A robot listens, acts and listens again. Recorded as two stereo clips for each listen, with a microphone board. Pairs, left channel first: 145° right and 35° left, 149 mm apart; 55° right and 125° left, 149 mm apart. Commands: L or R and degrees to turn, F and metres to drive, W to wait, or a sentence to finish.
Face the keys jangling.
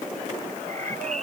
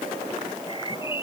W
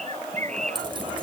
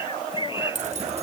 L90
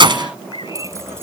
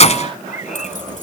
R20
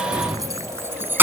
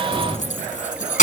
R40
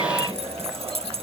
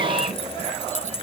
R10
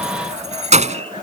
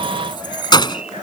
Facing the keys jangling.